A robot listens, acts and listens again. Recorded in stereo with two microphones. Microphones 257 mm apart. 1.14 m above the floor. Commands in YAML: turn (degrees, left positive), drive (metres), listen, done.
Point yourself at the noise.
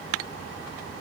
listen: true
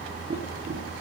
turn: -40
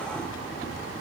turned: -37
listen: true
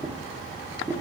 turn: -10
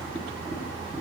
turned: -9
done: "Found it: tapping, straight ahead."